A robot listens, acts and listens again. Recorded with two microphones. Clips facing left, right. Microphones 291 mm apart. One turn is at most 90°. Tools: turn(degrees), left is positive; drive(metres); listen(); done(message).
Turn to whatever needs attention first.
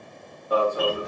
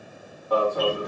turn(degrees=30)
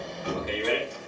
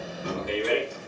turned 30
turn(degrees=-15)
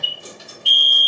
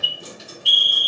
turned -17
done("Found it: an alarm, straight ahead, 1 to 2 m away.")